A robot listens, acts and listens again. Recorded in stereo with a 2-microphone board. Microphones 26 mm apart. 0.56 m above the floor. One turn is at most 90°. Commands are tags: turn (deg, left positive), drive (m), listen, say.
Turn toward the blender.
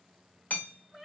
<listen/>
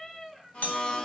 <turn deg="35"/>
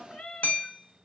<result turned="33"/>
<listen/>
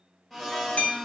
<say>Found it: a blender, straight ahead, under 1 m away.</say>